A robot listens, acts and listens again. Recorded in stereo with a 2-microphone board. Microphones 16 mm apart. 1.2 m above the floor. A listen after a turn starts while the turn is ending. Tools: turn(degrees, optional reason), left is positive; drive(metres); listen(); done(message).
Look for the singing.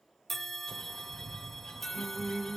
turn(degrees=-40, reason="The singing: about 40° right or 140° right.")
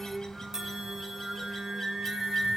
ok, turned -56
turn(degrees=-80, reason="So it is at 80° right.")
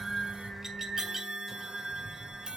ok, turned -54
turn(degrees=-30, reason="The singing is now 30° right.")
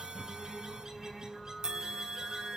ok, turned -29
done("Found it: singing, straight ahead, over 4 m away.")